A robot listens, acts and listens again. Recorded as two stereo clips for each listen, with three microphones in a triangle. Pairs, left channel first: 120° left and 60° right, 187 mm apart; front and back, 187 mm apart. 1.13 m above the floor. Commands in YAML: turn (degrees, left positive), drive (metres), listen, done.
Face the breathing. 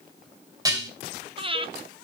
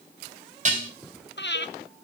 done: "Found it: breathing, straight ahead."